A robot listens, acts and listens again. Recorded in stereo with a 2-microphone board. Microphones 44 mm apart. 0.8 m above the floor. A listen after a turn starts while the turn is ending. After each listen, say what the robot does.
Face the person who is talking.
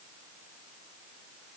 Keep listening.
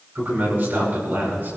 Turn 50° right.
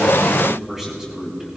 Turn 10° right.
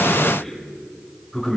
Facing the man speaking, over 4 m away.